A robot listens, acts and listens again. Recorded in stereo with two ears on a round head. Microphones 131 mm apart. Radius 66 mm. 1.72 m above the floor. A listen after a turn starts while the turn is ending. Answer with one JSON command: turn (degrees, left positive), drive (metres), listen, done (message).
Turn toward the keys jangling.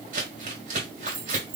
{"turn": -65}
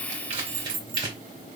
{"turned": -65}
{"turn": -40}
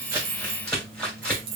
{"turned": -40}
{"turn": -35}
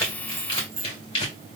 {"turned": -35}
{"turn": -20}
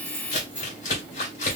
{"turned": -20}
{"turn": -10}
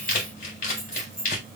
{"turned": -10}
{"done": "Found it: keys jangling, straight ahead."}